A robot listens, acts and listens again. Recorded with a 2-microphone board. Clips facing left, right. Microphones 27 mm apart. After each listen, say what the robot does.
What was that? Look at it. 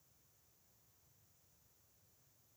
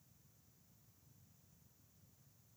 Keep listening.
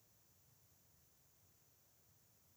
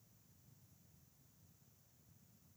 Keep listening.
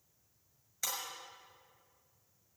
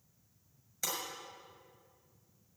Turn 30° left.
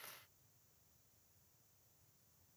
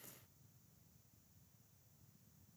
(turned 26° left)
Keep listening.
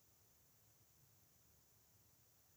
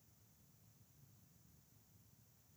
I heard breaking glass, but can't make it out now. It was about 15° right or 145° left.